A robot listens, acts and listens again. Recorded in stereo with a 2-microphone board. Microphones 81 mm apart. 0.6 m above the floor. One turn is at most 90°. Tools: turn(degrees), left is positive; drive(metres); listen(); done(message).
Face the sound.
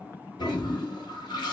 turn(degrees=65)
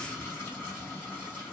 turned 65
turn(degrees=25)
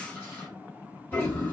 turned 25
turn(degrees=25)
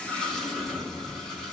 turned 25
done("Facing the toilet flushing.")